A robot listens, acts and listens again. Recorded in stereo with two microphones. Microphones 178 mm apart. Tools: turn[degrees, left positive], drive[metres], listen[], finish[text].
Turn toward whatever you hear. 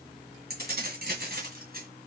Thought: The keys jangling: about 60° right or 120° right.
Action: turn[-60]
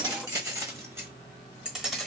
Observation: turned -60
Action: finish[Found it: keys jangling, straight ahead, 1 to 2 m away.]